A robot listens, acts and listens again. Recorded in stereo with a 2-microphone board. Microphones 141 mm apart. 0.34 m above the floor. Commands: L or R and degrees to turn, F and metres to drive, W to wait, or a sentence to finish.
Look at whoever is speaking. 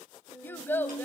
L30
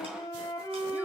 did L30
W
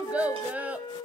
R10
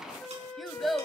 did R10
Facing the child speaking.